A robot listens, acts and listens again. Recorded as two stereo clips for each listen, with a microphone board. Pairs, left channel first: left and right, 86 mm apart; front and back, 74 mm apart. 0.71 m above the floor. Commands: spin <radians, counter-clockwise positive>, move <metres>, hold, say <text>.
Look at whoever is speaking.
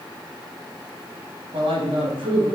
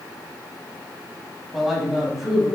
spin -1.66
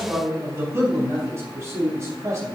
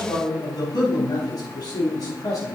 spin -0.61
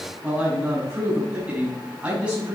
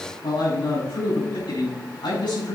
spin -0.26
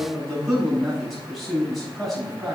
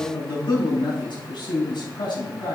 say Found it: a man speaking, straight ahead, over 4 m away.